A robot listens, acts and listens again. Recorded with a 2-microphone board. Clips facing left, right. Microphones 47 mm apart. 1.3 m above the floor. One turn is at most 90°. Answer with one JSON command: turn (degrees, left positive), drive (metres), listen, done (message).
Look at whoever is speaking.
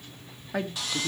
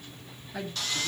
{"turn": 70}
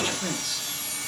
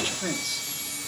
{"done": "Facing the woman speaking."}